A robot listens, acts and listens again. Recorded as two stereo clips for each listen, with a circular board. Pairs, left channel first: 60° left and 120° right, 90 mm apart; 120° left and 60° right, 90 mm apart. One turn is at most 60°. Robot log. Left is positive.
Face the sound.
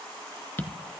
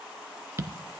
end: Facing the tapping, 1 to 2 m away.